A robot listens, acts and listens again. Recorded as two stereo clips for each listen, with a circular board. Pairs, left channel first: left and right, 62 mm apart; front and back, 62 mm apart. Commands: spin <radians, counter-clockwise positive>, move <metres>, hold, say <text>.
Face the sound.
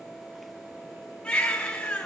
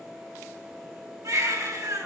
spin 2.79
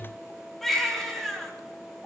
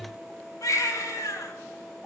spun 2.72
say Found it: a baby crying, straight ahead, 2 to 4 m away.